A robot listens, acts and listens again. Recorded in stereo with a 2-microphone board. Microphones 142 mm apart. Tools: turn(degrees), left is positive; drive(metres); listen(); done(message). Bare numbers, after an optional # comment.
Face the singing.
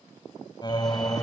# The singing: about 30° left or 150° left.
turn(30)
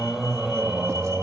# So it is at 10° right.
turn(-10)
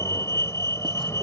listen()
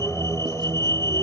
# The singing is now 25° right.
turn(-25)
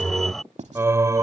# The singing is now 25° right.
turn(-25)
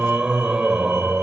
done("Facing the singing.")